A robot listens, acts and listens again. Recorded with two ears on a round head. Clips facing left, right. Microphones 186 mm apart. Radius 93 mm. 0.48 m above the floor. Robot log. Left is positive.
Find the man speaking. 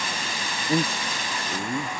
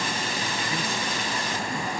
note: The man speaking: about 30° left or 150° left.
cmd yaw +30
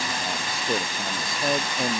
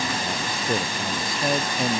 end: Facing the man speaking.